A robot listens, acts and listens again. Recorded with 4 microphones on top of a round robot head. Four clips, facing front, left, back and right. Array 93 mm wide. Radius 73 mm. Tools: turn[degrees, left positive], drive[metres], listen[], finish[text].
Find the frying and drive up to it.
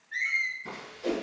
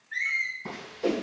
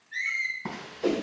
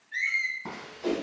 Thought: The frying: 175° right.
Action: turn[-175]
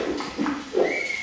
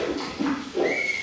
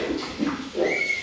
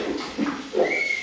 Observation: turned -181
Action: drive[1.0]
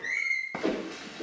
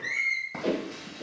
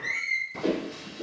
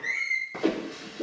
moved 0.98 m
Action: drive[1.0]
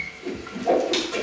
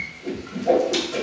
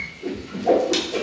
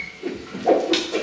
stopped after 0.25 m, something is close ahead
Action: finish[I am next to the frying.]